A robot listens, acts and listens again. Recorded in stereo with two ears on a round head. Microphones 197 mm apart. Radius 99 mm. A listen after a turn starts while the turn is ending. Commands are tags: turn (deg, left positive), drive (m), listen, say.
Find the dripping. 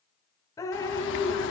<turn deg="15"/>
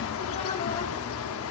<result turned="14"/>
<listen/>
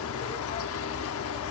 <listen/>
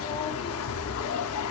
<say>I heard dripping, but can't make it out now. It was about straight ahead or 150° left.</say>